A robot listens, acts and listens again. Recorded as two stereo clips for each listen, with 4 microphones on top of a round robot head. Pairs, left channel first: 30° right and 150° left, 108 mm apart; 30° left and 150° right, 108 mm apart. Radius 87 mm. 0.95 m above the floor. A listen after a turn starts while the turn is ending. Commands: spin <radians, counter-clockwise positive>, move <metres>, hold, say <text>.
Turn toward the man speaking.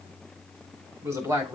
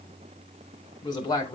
spin 1.48
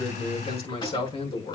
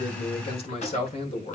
say Found it: a man speaking, straight ahead.